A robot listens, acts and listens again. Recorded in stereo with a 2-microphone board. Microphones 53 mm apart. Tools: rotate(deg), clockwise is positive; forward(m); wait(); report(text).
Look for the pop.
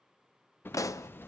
rotate(-90)
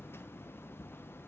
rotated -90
report("I heard a pop from this way, but can't make it out now.")